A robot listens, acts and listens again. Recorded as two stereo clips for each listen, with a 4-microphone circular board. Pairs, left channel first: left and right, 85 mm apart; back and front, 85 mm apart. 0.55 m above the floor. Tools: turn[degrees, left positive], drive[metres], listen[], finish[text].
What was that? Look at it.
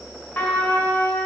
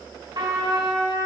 Thought: The trumpet: 20° left.
Action: turn[20]
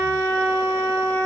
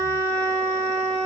Action: finish[Facing the trumpet, 1 to 2 m away.]